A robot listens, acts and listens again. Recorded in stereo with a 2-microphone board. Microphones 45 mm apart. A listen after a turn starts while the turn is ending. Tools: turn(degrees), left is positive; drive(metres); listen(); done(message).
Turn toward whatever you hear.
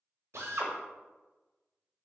turn(degrees=-70)
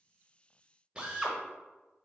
turn(degrees=-20)
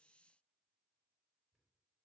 listen()
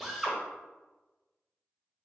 done("Facing the drill, under 1 m away.")